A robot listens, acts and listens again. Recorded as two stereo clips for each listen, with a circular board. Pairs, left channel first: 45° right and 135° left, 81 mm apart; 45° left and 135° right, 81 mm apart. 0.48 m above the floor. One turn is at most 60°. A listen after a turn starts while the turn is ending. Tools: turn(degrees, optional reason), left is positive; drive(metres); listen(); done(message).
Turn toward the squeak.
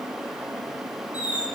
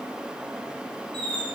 turn(degrees=-60, reason="The squeak: 150° right.")
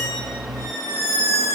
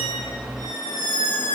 turn(degrees=-60, reason="The squeak is now 105° right.")
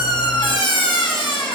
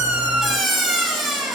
turn(degrees=-45, reason="The squeak is now 45° right.")
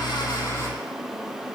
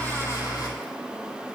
listen()
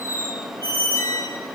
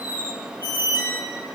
done("Found it: a squeak, straight ahead, 1 to 2 m away.")